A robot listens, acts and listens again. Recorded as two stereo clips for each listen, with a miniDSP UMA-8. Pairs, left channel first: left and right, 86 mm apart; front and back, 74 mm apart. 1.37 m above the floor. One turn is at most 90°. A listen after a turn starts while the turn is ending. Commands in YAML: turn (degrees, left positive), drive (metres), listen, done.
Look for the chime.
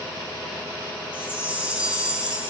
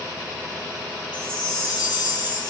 turn: -15
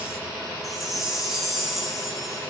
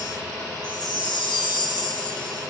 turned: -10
done: "Facing the chime, 1 to 2 m away."